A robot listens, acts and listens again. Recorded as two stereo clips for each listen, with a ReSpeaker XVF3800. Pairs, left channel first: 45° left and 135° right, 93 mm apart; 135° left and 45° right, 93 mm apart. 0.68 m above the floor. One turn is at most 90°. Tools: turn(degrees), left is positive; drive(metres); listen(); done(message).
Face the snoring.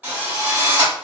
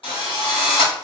listen()
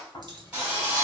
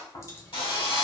turn(degrees=90)
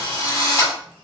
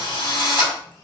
listen()
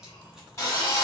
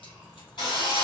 listen()
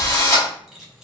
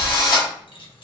turn(degrees=45)
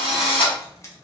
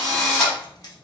listen()
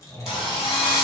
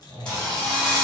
done("Found it: snoring, straight ahead, 1 to 2 m away.")